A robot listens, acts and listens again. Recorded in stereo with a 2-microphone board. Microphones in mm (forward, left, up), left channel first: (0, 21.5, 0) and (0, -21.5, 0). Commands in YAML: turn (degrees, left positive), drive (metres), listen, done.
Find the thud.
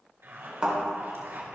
turn: -20
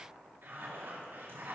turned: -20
listen: true
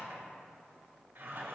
done: "I heard a thud, but can't make it out now. It was about straight ahead or 140° right."